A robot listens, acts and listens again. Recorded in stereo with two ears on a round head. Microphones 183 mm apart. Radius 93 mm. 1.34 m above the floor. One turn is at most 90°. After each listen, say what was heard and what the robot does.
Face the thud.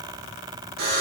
Keep listening.
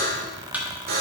Turn 30° right.
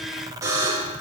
Keep listening.
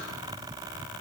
I heard a thud, but can't make it out now. It was about 20° left or 140° right.